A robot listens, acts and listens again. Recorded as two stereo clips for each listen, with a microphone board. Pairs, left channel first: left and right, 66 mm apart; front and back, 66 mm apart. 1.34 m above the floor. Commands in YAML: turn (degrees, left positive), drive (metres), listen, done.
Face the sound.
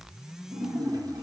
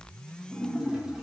turn: -100
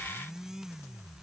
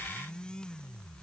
done: "Facing where the splash came from. I can't hear it now."